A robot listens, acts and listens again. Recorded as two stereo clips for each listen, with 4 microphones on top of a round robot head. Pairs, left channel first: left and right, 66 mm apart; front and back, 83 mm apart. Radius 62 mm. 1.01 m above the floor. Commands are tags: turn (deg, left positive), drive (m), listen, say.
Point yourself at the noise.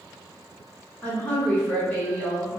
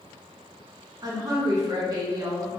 <turn deg="150"/>
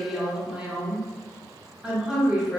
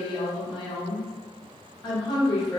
<turn deg="-15"/>
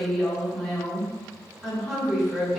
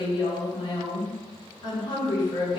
<say>Facing the woman speaking.</say>